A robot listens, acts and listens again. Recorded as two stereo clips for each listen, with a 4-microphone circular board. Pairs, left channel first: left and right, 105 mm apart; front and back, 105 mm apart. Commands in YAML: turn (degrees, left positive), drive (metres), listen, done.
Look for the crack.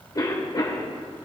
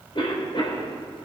listen: true
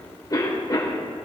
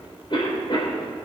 listen: true
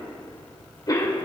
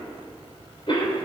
done: "I can't make out a crack to turn to."